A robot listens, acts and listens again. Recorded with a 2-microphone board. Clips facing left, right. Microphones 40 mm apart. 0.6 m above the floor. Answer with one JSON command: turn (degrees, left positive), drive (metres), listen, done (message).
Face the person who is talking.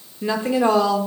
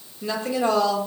{"turn": 35}
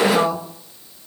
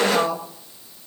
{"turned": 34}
{"done": "Facing the woman speaking, 1 to 2 m away."}